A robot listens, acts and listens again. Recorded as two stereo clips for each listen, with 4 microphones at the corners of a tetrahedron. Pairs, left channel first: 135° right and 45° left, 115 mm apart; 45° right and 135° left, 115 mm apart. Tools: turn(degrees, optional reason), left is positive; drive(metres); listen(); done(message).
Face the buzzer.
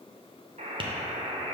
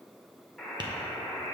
turn(degrees=45, reason="The buzzer: 45° left.")
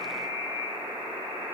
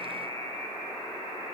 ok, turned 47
done("Facing the buzzer.")